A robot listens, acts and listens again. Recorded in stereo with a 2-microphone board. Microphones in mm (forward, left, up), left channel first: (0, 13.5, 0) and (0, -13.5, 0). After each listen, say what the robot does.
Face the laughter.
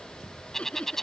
Turn 40° left.
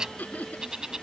Turn 100° left.
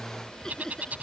Keep listening.
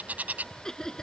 Turn 20° left.
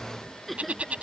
Found it: laughter, straight ahead.